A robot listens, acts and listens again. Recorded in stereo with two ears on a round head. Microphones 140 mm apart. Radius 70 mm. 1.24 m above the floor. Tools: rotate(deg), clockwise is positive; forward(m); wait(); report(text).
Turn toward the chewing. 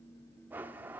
wait()
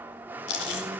rotate(-90)
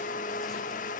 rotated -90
wait()
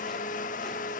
wait()
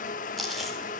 report("Found it: chewing, straight ahead, over 4 m away.")